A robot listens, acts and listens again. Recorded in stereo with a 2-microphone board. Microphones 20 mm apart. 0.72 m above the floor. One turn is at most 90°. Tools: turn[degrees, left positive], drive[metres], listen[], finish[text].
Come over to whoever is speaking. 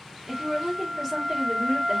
Thought: The woman speaking: about 15° right or 165° right.
Action: turn[-15]
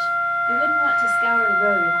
Action: listen[]
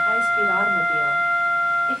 Thought: So it is at 150° right.
Action: turn[-90]
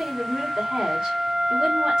Thought: The woman speaking is now 55° right.
Action: turn[-55]
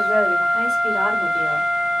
Action: listen[]
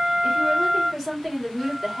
Action: drive[1.0]
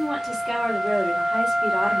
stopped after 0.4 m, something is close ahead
Action: finish[Blocked. The woman speaking is further on, straight ahead.]